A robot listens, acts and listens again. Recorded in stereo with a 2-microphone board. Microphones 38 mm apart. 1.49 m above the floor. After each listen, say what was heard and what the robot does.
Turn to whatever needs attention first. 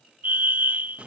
The fire alarm: about 55° right or 125° right. Turn 55° right.
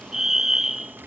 So it is at 10° right. Turn 10° right.
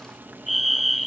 Facing the fire alarm.